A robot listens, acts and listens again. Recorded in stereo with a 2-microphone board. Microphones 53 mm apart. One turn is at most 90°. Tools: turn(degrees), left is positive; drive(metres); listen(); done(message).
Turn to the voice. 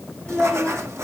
turn(degrees=30)
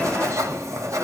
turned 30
listen()
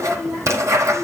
turn(degrees=30)
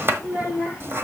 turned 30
turn(degrees=-20)
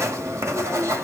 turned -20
listen()
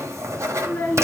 turn(degrees=10)
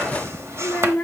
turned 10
done("Found it: a child speaking, straight ahead.")